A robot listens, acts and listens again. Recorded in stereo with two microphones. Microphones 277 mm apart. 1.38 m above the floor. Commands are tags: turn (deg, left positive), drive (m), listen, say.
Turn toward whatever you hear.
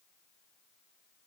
<listen/>
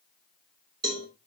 <turn deg="-65"/>
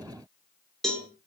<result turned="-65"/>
<say>Found it: a cowbell, straight ahead.</say>